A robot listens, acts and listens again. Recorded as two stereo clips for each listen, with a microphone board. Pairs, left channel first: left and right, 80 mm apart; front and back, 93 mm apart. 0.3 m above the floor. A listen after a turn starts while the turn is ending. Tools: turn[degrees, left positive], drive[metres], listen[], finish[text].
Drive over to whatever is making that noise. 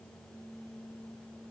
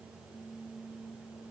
Action: listen[]
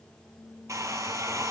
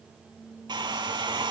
Thought: The hair dryer: 140° right.
Action: turn[-140]
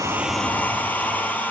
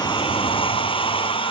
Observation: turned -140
Thought: The hair dryer is now 20° left.
Action: turn[20]
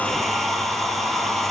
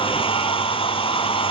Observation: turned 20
Action: drive[1.0]
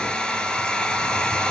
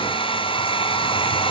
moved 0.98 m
Thought: The hair dryer is now 10° left.
Action: turn[10]
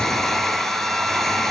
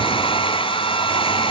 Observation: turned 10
Action: drive[1.0]
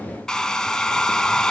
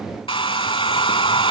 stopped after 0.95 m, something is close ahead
Thought: The hair dryer is now 10° left.
Action: turn[10]
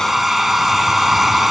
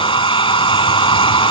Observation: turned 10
Action: finish[Arrived at the hair dryer, straight ahead.]